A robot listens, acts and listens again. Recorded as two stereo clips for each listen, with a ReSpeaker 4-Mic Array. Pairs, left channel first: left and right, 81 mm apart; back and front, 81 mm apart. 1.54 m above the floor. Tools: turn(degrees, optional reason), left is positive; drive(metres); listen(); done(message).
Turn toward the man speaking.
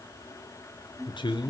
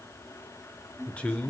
turn(degrees=105, reason="The man speaking: 105° left.")
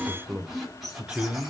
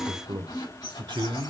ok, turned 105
turn(degrees=-15, reason="The man speaking is now 15° right.")
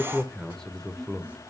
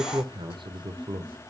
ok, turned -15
done("Facing the man speaking, 1 to 2 m away.")